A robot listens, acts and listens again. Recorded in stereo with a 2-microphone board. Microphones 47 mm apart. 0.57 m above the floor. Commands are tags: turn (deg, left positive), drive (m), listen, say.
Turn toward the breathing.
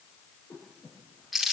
<turn deg="90"/>
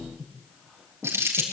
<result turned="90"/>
<say>Found it: breathing, straight ahead.</say>